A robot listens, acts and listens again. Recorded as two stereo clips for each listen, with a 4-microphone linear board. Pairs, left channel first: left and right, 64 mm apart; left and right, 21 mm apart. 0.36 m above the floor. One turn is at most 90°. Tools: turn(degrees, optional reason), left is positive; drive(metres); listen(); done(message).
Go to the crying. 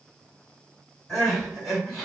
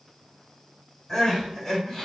turn(degrees=30)
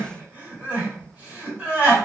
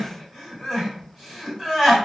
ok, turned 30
turn(degrees=-25, reason="So it is at 25° right.")
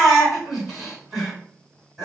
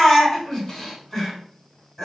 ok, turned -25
drive(metres=1.0)
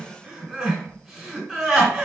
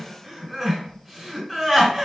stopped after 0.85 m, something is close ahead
turn(degrees=-10, reason="The crying is now 10° right.")
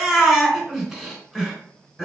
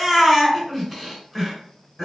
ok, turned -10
done("I am next to the crying.")